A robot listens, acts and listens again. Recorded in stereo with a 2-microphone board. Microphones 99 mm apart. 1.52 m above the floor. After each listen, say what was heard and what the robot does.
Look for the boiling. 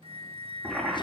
Turn 30° right.
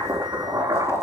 So it is at 140° right. Turn 140° right.
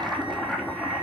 The boiling is now 10° left. Turn 10° left.
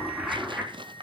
Facing the boiling.